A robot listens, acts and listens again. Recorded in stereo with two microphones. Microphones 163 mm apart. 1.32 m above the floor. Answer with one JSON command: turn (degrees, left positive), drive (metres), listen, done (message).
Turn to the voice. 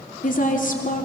{"turn": 55}
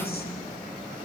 {"turn": 70}
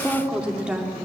{"done": "Found it: a woman speaking, straight ahead, 2 to 4 m away."}